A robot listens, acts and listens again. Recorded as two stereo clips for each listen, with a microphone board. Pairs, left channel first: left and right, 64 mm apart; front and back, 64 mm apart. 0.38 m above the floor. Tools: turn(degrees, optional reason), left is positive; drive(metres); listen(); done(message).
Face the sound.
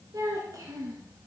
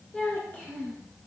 turn(degrees=-65, reason="The child speaking: 65° right.")
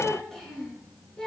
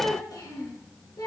turn(degrees=10, reason="The child speaking is now 10° left.")
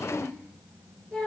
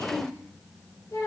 turn(degrees=10, reason="The child speaking is now 10° left.")
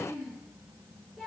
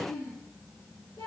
done("Facing the child speaking.")